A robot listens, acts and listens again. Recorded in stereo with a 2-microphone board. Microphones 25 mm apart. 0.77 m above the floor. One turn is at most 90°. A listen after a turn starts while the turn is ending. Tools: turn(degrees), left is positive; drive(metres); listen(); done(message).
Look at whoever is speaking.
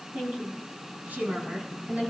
turn(degrees=-90)
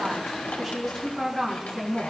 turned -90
turn(degrees=20)
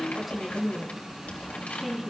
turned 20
done("Found it: a woman speaking, straight ahead.")